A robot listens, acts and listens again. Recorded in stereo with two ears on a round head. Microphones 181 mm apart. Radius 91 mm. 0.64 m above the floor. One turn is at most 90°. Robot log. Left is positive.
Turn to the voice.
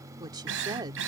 note: The woman speaking: about 20° right or 160° right.
cmd yaw -20
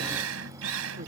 cmd idle
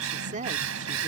note: So it is at 135° right.
cmd yaw -90
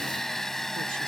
note: Nothing new. It was at 45° right.
cmd yaw -45
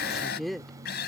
end: Found it: a woman speaking, straight ahead.